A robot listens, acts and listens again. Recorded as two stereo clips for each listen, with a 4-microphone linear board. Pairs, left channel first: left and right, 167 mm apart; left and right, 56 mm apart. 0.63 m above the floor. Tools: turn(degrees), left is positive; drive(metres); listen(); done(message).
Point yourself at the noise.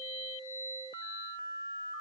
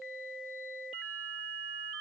listen()
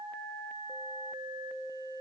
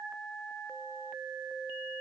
listen()
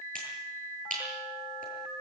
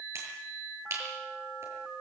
turn(degrees=-55)
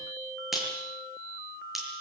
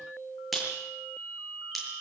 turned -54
done("Found it: a finger snap, straight ahead, over 4 m away.")